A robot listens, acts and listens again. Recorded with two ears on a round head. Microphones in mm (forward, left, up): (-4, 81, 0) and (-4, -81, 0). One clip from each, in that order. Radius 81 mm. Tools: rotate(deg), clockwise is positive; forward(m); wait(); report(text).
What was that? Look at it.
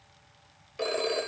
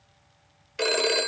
rotate(55)
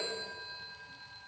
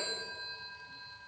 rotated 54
report("Found it: a phone ringing, straight ahead.")